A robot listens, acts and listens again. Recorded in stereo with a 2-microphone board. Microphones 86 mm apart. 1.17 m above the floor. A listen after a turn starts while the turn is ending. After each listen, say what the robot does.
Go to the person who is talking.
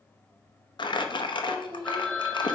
Turn 45° right.
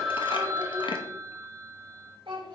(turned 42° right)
Turn 95° right.
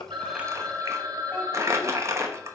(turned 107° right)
Turn 15° left.
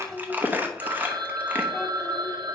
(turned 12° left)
Drive 1.0 m forward.
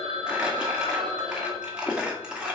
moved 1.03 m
Keep listening.
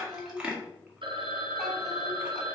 Drive 1.0 m forward.
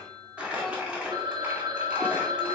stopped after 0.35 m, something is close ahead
Keep listening.
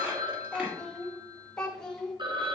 Turn 10° left.
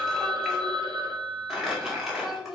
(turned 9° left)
I am next to the child speaking.